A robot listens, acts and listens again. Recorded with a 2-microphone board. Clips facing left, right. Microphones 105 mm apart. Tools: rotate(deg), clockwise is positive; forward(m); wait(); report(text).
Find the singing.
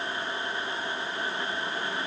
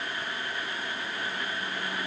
wait()
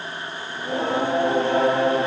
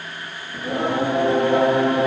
rotate(65)
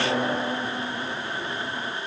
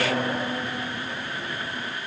report("Found it: singing, straight ahead.")